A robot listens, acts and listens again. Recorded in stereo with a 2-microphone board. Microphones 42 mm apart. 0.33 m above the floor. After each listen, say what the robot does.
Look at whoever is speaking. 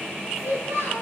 Turn 90° right.
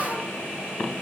Keep listening.
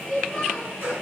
Facing the child speaking, over 4 m away.